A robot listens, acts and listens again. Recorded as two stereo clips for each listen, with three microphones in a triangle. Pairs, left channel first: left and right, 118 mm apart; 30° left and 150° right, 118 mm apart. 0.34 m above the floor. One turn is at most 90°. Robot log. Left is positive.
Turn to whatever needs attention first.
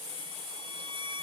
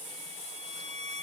cmd idle
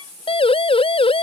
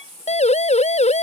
note: The siren: 50° left.
cmd yaw +50
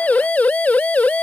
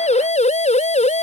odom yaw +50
note: The siren is now 10° left.
cmd yaw +10
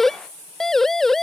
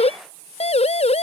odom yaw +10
end: Found it: a siren, straight ahead.